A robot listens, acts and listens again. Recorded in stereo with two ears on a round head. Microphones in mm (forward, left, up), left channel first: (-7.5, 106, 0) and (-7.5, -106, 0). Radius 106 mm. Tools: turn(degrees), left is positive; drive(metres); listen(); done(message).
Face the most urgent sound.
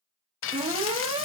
turn(degrees=-25)
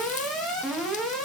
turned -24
done("Facing the alarm.")